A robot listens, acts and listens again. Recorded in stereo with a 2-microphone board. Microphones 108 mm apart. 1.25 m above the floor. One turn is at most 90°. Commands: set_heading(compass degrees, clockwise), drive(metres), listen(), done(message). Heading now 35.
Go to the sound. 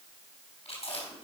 set_heading(305)
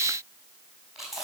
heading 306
drive(1.0)
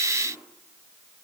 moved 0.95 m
listen()
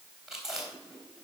drive(1.0)
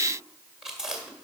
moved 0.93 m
drive(1.0)
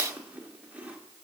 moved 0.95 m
set_heading(321)
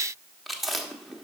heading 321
drive(1.0)
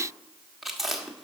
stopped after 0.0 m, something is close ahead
done("Arrived at the chewing, straight ahead.")